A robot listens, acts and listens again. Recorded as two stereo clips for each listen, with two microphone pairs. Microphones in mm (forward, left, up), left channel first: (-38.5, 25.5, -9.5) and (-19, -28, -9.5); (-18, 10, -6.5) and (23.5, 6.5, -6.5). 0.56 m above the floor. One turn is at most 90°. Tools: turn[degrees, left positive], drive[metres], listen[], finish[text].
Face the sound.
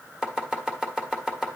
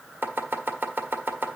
Action: finish[Found it: chopping, straight ahead, 1 to 2 m away.]